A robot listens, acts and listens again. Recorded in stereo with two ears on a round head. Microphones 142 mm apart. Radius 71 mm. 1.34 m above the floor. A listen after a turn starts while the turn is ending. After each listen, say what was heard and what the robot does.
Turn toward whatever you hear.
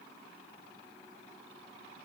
Keep listening.
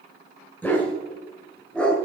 Turn 30° left.
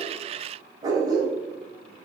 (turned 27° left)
So it is at 25° right. Turn 25° right.
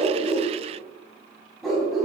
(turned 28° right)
Found it: a dog barking, straight ahead.